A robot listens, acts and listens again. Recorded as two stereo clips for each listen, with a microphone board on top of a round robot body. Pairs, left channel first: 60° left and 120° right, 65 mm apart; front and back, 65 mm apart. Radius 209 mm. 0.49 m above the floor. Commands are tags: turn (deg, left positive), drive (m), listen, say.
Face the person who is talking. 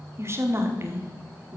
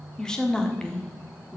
<turn deg="-75"/>
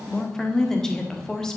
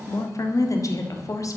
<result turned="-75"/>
<turn deg="-20"/>
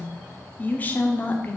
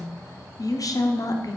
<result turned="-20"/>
<say>Found it: a woman speaking, straight ahead.</say>